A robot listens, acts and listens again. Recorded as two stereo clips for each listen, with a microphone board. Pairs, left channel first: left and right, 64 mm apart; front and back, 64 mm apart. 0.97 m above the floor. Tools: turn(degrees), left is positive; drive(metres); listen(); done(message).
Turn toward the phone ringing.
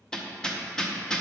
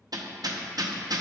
listen()
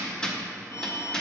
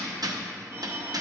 turn(degrees=130)
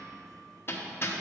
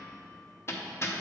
listen()
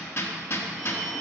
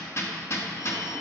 done("Facing the phone ringing.")